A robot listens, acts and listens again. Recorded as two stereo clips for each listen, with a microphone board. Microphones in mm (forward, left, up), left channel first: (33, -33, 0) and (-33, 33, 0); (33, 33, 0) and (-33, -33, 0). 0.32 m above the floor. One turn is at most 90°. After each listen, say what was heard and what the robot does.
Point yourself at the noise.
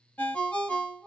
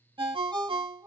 The ringtone: 120° right. Turn 90° right.
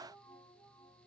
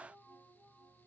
Nothing new. It was at 30° right. Turn 30° right.
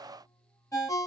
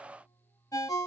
Found it: a ringtone, straight ahead, under 1 m away.